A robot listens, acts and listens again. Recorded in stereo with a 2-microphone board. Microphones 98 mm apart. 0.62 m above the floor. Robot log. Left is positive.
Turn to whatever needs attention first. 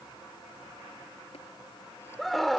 cmd yaw +30
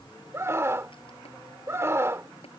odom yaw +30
note: So it is at 30° right.
cmd yaw -30
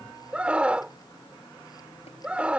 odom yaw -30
note: The scream is now 15° right.
cmd yaw -15
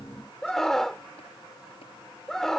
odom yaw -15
end: Found it: a scream, straight ahead.